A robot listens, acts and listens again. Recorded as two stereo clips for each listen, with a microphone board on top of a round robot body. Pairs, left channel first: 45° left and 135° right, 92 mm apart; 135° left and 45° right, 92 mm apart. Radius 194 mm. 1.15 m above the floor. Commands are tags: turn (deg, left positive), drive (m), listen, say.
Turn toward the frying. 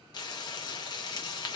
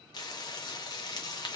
<turn deg="90"/>
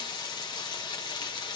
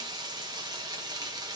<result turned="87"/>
<say>Facing the frying.</say>